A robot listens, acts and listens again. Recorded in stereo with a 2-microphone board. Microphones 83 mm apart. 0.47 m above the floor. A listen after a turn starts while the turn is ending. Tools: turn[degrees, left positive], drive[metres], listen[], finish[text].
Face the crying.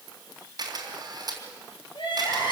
Action: turn[90]
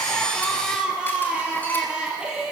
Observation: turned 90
Thought: So it is at 10° right.
Action: turn[-10]
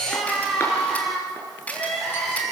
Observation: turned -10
Action: finish[Found it: crying, straight ahead, over 4 m away.]